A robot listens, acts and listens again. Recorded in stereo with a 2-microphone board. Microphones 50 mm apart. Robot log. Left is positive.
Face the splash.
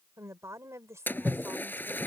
note: The splash: about 40° left or 140° left.
cmd yaw +40
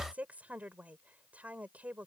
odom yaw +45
cmd idle
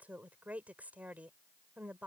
end: I heard a splash, but can't make it out now. It was about 5° right or 95° left.